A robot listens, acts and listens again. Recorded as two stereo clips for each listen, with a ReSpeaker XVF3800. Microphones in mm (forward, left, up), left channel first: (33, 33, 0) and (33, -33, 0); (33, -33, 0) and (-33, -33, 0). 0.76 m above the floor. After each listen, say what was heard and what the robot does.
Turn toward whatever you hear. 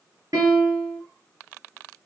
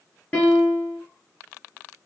The piano: 75° right. Turn 75° right.
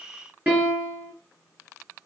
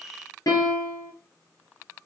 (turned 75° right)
The piano is now 25° right. Turn 25° right.
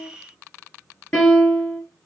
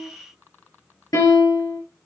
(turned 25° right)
The piano is now 10° left. Turn 10° left.
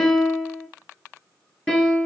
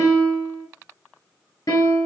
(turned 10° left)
Found it: a piano, straight ahead, 2 to 4 m away.